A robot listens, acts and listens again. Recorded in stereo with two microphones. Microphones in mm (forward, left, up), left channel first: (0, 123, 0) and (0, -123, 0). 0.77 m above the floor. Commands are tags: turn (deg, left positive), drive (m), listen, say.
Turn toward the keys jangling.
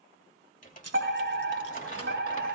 <turn deg="-70"/>
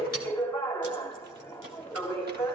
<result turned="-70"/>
<listen/>
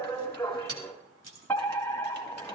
<turn deg="-75"/>
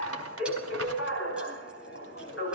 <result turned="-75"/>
<listen/>
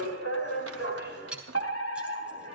<say>Facing the keys jangling.</say>